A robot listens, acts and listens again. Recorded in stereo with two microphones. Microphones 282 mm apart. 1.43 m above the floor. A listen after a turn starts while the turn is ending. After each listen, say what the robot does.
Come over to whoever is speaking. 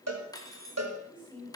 Turn 15° right.
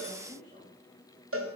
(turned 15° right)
Turn 150° right.
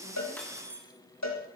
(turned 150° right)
Keep listening.
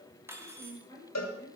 Turn 10° left.
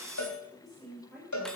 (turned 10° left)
Drive 1.0 m forward.
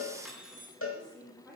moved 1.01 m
Drive 1.0 m forward.
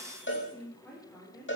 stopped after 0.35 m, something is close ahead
Blocked. The woman speaking is further on, straight ahead.